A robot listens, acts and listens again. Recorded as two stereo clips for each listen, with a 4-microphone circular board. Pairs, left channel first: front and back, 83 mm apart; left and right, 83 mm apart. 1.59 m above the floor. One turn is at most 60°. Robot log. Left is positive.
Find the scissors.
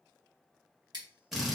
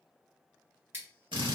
note: The scissors: 150° right.
cmd yaw -60
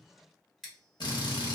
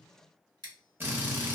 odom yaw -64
note: The scissors is now 90° right.
cmd yaw -60
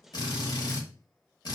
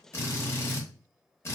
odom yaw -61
note: Nothing new. It was at 25° right.
cmd yaw -25
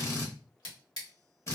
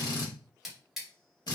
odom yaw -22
end: Found it: scissors, straight ahead.